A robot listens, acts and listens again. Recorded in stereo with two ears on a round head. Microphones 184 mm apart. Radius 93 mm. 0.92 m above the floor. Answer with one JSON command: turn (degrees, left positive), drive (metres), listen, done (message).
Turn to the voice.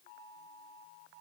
{"listen": true}
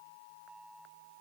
{"listen": true}
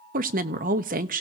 {"turn": -40}
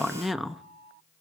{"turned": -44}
{"done": "Facing the woman speaking."}